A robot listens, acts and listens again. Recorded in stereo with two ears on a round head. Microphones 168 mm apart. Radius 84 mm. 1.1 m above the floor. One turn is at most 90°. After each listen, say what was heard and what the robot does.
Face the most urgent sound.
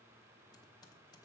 Keep listening.
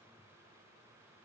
Keep listening.
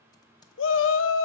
Turn 90° left.
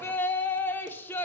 So it is at 10° left. Turn 10° left.
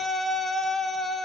Found it: a shout, straight ahead.